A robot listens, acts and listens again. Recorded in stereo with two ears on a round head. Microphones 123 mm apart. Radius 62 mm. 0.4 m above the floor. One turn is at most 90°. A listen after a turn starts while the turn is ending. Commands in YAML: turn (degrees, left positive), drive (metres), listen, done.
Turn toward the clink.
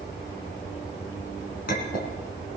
turn: 70
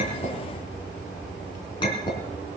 turn: 35
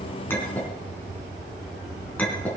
turn: 10
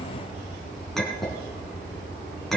done: "Found it: a clink, straight ahead."